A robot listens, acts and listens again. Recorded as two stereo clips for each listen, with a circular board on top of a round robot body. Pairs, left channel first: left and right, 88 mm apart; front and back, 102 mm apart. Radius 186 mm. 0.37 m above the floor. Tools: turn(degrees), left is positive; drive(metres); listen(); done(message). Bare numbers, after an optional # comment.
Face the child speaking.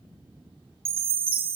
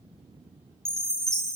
listen()
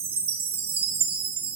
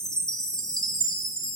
listen()
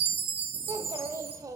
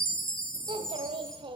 # The child speaking: 140° right.
turn(-140)
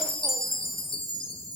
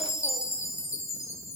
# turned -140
listen()
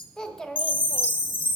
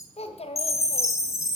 done("Facing the child speaking, 1 to 2 m away.")